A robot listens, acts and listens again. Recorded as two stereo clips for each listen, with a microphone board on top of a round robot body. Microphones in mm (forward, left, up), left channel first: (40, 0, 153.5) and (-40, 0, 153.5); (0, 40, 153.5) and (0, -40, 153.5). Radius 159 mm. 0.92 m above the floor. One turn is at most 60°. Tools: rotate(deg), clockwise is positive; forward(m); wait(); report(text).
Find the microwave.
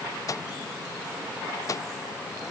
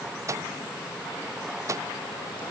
rotate(40)
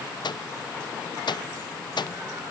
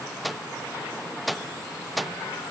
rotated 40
report("Found it: a microwave, straight ahead.")